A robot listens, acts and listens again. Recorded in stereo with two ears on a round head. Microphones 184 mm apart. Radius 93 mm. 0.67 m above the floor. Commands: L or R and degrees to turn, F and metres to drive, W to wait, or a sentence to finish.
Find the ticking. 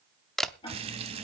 L25
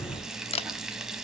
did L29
W
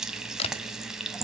W
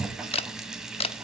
I heard ticking, but can't make it out now. It was about 5° right or 130° left.